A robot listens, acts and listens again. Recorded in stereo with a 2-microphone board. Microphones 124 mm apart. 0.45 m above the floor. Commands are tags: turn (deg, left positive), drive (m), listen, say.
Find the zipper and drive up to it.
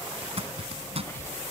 <turn deg="-55"/>
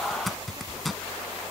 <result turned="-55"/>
<drive m="1.0"/>
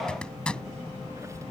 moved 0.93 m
<turn deg="10"/>
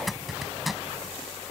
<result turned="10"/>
<drive m="1.0"/>
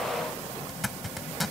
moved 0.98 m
<drive m="1.0"/>
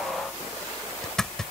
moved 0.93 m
<drive m="1.0"/>
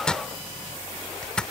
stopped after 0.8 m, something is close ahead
<turn deg="10"/>
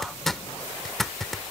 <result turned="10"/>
<say>Arrived at the zipper, straight ahead.</say>